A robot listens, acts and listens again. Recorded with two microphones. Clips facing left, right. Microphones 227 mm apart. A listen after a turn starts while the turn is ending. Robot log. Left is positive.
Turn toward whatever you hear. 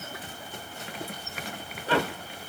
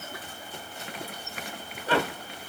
cmd idle
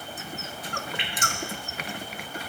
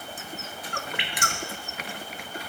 cmd yaw -90
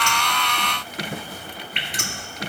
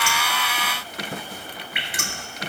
note: So it is at 10° right.
cmd yaw -10
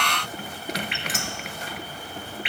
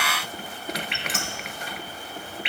end: Found it: dripping, straight ahead, 1 to 2 m away.